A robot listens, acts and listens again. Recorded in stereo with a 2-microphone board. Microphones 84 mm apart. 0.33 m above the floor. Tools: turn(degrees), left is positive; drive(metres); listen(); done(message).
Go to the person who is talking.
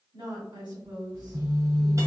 turn(degrees=-60)
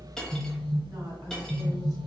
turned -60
listen()
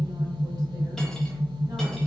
listen()
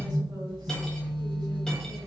done("I heard a woman speaking, but can't make it out now. It was about straight ahead or 60° right. I did not reach it.")